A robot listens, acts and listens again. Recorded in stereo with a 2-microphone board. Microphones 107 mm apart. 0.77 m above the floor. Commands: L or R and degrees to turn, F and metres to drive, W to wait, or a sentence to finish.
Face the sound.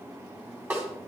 R20
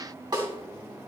R135
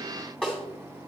Facing the snare drum.